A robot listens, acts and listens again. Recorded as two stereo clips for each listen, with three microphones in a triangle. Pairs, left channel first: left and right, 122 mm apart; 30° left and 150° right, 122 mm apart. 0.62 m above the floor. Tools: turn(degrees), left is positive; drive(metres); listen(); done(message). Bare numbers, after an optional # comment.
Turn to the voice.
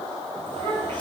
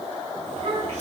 # The child speaking: 135° right.
turn(-135)
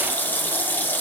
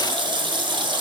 listen()
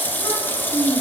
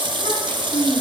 # The child speaking is now 15° left.
turn(15)
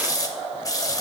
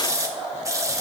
listen()
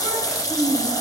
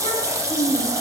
done("Found it: a child speaking, straight ahead, 2 to 4 m away.")